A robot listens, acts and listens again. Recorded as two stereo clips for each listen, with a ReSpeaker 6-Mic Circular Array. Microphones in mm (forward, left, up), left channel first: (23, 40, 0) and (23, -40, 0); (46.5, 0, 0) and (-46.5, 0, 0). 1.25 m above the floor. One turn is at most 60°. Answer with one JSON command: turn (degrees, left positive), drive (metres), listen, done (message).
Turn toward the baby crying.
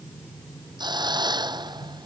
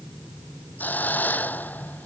{"listen": true}
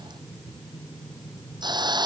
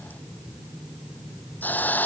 {"listen": true}
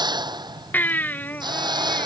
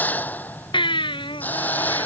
{"turn": 20}
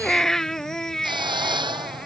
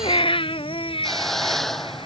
{"done": "Found it: a baby crying, straight ahead."}